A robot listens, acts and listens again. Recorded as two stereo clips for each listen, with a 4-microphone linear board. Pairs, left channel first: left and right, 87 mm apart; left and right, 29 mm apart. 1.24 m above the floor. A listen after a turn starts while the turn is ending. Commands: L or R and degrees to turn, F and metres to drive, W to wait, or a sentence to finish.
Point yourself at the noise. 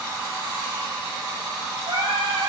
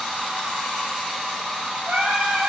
R90
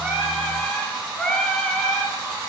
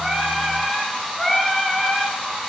L10
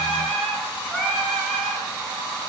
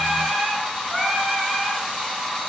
Found it: singing, straight ahead.